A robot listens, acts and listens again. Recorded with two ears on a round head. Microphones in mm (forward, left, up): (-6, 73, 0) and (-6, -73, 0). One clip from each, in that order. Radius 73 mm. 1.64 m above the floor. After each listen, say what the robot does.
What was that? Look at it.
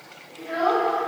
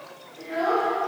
Turn 30° left.
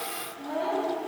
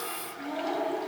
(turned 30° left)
Turn 135° left.
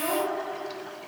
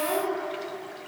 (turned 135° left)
Turn 15° left.
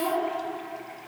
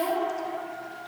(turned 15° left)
Turn 10° left.
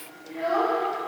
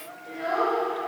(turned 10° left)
Facing the child speaking, 2 to 4 m away.